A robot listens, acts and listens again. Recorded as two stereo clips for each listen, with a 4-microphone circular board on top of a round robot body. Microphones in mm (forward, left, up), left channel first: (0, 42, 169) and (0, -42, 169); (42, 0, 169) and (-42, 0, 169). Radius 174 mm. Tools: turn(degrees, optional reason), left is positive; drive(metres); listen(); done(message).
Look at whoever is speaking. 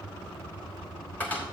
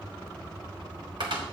listen()
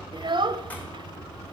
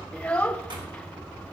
turn(degrees=-75, reason="The child speaking: 75° right.")
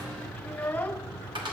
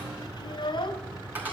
turn(degrees=15, reason="The child speaking is now 15° left.")
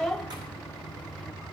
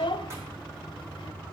done("Found it: a child speaking, straight ahead, under 1 m away.")